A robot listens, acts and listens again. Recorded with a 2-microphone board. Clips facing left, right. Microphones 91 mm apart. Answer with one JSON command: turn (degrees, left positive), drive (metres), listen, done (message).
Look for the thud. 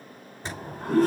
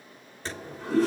{"turn": 30}
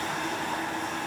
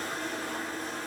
{"listen": true}
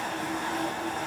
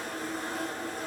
{"done": "I heard a thud, but can't make it out now. It was about 15° right or 135° left."}